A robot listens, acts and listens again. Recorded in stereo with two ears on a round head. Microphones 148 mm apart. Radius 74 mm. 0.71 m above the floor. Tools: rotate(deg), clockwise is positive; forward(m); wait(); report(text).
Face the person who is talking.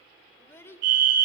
rotate(-15)
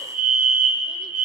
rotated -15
wait()
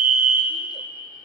wait()
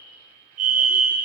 report("I heard a child speaking, but can't make it out now. It was about straight ahead or 150° left.")